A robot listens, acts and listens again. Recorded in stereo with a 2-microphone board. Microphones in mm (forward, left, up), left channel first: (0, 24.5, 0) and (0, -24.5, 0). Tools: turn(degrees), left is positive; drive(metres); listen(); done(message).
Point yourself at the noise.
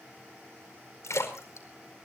turn(degrees=90)
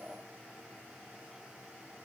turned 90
done("Facing where the splash came from. I can't hear it now.")